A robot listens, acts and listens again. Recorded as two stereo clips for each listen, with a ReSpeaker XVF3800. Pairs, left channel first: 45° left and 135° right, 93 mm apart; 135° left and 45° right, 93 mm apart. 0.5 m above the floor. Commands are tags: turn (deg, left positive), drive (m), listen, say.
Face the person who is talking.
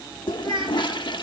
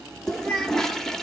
<turn deg="-145"/>
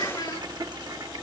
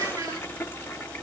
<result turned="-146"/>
<listen/>
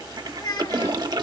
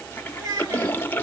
<say>Facing the child speaking.</say>